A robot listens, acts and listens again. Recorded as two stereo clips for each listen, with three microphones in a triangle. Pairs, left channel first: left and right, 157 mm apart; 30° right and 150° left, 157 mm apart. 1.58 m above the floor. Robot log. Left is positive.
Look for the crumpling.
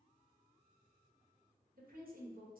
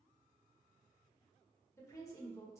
cmd idle
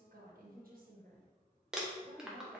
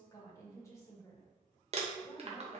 note: The crumpling: 175° right.
cmd yaw -175
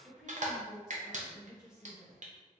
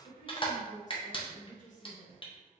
note: The crumpling is now 80° right.
cmd yaw -80
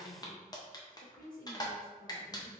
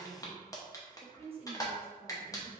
note: The crumpling is now 30° left.
cmd yaw +30
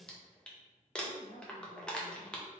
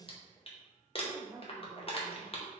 end: Facing the crumpling, under 1 m away.